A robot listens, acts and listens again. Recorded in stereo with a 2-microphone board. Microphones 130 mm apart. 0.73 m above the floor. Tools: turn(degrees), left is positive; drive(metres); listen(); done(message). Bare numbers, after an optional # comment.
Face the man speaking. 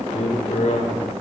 # The man speaking: about 65° left or 115° left.
turn(65)
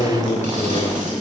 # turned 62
# So it is at 60° left.
turn(60)
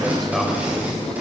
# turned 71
done("Facing the man speaking, 2 to 4 m away.")